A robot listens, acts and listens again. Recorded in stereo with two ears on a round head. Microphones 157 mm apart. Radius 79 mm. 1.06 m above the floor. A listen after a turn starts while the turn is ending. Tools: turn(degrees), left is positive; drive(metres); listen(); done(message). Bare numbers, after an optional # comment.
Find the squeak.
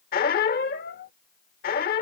# The squeak: about 55° left or 125° left.
turn(55)
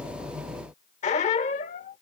# So it is at 50° left.
turn(50)
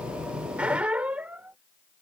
# The squeak is now 10° right.
turn(-10)
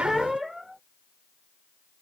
done("Found it: a squeak, straight ahead.")